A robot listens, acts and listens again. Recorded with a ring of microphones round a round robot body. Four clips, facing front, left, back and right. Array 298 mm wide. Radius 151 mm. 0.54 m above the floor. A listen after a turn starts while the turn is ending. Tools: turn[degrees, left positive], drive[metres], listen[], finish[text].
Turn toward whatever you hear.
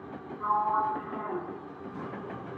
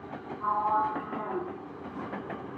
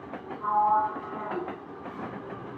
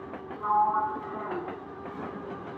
Thought: The sliding door: 15° right.
Action: turn[-15]
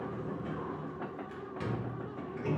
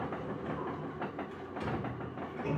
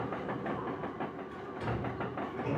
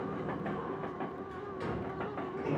Action: finish[Found it: a sliding door, straight ahead.]